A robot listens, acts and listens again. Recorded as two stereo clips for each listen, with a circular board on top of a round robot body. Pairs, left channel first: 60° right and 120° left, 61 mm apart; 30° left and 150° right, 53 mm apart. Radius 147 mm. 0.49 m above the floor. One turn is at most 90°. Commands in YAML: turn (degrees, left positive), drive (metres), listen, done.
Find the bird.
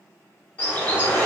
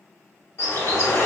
done: "Facing the bird, 1 to 2 m away."